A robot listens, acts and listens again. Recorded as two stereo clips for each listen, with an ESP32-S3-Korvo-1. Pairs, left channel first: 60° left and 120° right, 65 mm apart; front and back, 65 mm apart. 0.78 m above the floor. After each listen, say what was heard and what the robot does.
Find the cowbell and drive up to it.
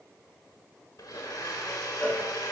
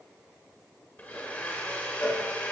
Drive 1.0 m forward.
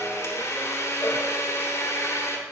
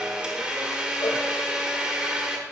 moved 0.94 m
Keep listening.
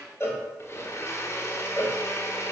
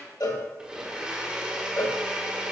The cowbell is now 10° left. Turn 10° left.
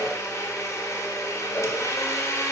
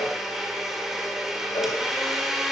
Keep listening.
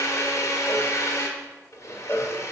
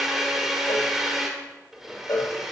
Drive 1.0 m forward.
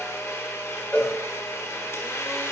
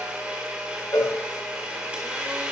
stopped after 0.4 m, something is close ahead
Arrived at the cowbell, straight ahead.